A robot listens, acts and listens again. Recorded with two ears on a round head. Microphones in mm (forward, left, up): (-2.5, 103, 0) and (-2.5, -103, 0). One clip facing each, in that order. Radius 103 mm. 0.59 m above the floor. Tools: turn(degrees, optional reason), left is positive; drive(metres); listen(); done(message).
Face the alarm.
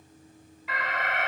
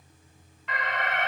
turn(degrees=30)
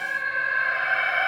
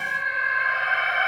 turn(degrees=145, reason="So it is at 145° left.")
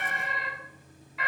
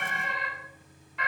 done("Found it: an alarm, straight ahead.")